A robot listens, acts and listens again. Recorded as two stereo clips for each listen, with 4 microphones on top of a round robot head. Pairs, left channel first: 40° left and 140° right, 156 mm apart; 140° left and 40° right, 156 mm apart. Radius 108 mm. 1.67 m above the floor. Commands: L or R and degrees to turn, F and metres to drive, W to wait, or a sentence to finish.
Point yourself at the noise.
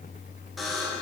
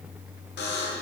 L130
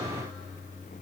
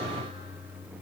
W
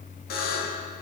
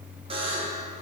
L15
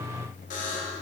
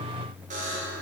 Facing the buzzer, 1 to 2 m away.